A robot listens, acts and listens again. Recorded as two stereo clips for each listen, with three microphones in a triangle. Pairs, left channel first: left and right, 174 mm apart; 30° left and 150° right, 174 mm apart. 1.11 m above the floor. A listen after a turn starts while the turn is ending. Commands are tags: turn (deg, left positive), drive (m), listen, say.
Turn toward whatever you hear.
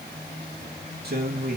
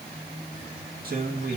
<turn deg="-120"/>
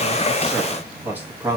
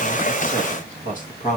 <turn deg="-15"/>
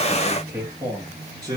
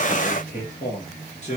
<turn deg="-20"/>
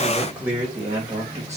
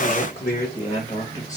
<turn deg="-15"/>
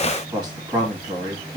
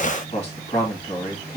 <say>Facing the man speaking, 1 to 2 m away.</say>